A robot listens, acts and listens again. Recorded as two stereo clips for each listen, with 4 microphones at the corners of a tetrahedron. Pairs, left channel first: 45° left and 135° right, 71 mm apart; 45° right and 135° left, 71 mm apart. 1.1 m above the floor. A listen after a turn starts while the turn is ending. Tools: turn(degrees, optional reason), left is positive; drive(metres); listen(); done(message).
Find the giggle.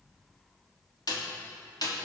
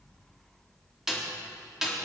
listen()
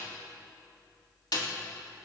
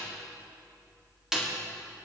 listen()
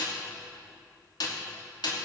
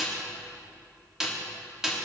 done("I can't make out a giggle to turn to.")